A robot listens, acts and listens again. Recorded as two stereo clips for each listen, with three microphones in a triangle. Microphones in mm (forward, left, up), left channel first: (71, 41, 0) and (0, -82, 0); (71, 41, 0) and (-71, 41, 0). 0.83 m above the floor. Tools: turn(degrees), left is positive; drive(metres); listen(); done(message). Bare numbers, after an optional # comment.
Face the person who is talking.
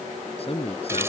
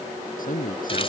# The man speaking: 15° left.
turn(15)
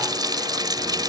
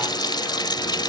listen()
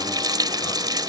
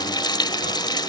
listen()
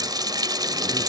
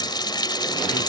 done("Facing where the man speaking came from. I can't hear it now.")